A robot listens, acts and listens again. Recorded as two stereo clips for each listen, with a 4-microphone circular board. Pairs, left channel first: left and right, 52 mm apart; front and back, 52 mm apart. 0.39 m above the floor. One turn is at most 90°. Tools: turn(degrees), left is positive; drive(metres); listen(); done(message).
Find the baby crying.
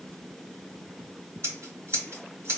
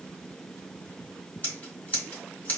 listen()
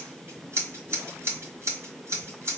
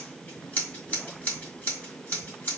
listen()
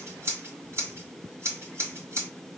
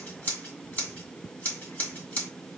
done("I can't make out a baby crying to turn to.")